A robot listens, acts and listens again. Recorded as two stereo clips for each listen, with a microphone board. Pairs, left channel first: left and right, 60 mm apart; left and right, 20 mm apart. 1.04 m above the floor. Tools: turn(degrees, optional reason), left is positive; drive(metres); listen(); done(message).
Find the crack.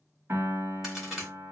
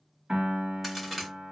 turn(degrees=-30)
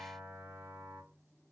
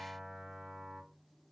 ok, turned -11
listen()
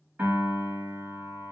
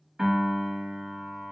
done("I heard a crack, but can't make it out now. It was about 5° left or 165° right.")